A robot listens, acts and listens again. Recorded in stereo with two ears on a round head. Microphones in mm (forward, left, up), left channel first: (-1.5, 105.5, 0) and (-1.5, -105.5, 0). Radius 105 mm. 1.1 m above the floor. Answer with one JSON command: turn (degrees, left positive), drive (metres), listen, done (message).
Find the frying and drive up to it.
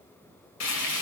{"turn": 90}
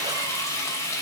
{"turn": 15}
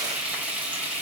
{"drive": 1.0}
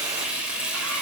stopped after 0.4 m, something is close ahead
{"done": "Something is in my way. I am facing the frying but have not reached it."}